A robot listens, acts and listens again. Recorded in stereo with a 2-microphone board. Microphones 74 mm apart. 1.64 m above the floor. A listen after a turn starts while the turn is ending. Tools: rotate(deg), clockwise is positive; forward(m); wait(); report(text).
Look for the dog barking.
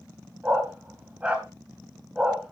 rotate(30)
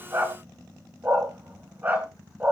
rotate(25)
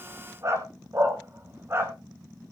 rotate(145)
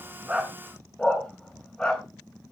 rotate(-15)
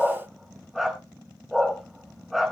report("Facing the dog barking, 2 to 4 m away.")